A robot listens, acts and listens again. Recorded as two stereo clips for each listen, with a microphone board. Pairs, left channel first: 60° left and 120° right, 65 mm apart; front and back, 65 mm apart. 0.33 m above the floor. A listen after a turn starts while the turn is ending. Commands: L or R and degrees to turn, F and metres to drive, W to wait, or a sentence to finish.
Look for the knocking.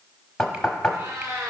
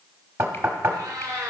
L140
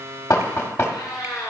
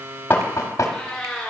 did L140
L20
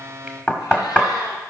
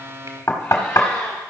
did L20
Facing the knocking, 1 to 2 m away.